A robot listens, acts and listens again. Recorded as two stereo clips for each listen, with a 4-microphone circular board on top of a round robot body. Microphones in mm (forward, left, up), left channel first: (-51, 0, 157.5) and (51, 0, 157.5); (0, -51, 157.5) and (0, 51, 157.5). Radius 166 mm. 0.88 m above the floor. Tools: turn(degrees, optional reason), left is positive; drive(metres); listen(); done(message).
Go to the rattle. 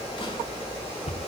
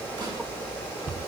listen()
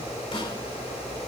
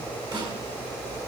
listen()
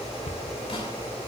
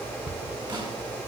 done("I can't make out a rattle, only a cupboard door.")